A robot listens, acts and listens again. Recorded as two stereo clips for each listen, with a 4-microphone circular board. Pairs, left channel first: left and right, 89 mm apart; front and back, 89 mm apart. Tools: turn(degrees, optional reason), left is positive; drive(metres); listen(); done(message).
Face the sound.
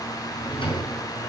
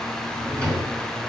turn(degrees=80, reason="The drawer: 80° left.")
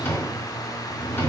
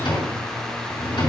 turn(degrees=20, reason="The drawer is now 20° left.")
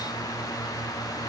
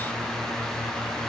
listen()
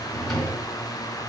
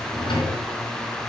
done("Facing the drawer.")